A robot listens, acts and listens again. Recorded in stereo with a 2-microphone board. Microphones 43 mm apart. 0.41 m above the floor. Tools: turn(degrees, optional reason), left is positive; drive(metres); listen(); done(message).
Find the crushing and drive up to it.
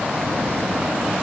listen()
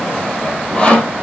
listen()
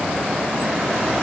done("I can't make out crushing, only sawing.")